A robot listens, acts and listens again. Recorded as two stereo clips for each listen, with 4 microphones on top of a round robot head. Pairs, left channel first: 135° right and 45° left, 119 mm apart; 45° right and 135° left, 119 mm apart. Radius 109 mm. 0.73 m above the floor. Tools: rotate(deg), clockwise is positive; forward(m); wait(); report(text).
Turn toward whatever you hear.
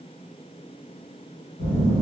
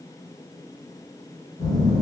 rotate(105)
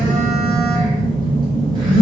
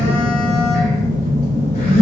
rotate(15)
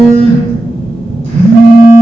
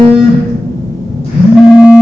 report("Facing the phone buzzing, under 1 m away.")